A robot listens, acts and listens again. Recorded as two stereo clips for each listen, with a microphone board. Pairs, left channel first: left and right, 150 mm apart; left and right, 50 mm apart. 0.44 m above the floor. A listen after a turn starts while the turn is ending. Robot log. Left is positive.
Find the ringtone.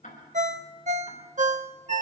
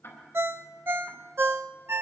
note: The ringtone: about 55° right or 125° right.
cmd yaw -55
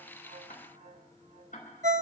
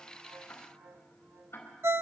note: So it is at 60° right.
cmd yaw -60
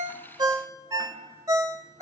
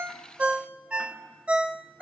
note: The ringtone is now 25° right.
cmd yaw -25
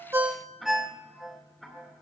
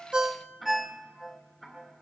end: Found it: a ringtone, straight ahead.